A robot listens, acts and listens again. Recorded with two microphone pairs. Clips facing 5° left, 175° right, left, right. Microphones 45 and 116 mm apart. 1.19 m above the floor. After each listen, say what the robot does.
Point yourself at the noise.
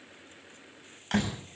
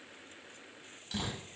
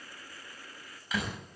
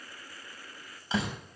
Turn 25° right.
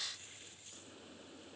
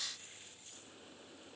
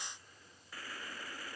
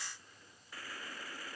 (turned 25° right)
I heard a door slam from this way, but can't make it out now.